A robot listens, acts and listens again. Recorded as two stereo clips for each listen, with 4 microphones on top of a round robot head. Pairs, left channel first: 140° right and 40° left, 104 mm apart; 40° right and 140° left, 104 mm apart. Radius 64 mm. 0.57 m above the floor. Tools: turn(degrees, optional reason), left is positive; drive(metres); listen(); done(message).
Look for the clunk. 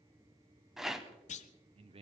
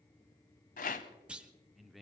turn(degrees=-140, reason="The clunk: 140° right.")
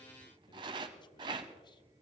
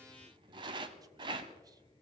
done("Facing where the clunk came from. I can't hear it now.")